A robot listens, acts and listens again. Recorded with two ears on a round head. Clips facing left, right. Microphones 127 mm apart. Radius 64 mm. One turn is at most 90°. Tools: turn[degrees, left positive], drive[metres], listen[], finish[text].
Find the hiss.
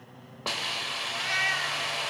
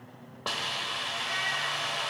Action: turn[30]
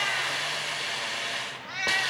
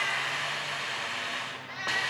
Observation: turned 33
Thought: So it is at 140° left.
Action: turn[90]
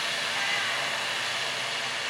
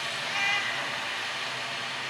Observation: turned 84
Thought: The hiss is now 55° left.
Action: turn[55]
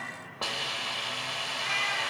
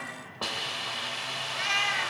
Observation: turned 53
Action: finish[Found it: a hiss, straight ahead, under 1 m away.]